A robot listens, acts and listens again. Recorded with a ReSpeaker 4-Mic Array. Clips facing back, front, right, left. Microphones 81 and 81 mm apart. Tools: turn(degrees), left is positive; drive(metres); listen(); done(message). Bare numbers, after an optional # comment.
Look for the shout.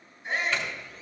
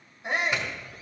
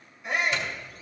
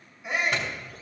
done("Found it: a shout, straight ahead.")